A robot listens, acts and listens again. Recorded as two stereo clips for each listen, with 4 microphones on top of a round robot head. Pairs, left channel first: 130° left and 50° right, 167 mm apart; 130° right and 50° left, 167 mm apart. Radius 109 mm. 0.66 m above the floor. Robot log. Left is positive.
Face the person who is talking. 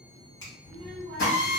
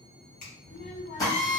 note: The child speaking: 115° right.
cmd yaw -115
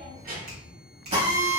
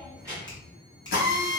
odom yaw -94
note: The child speaking is now 20° right.
cmd yaw -20
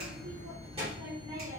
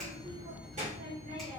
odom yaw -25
end: Facing the child speaking.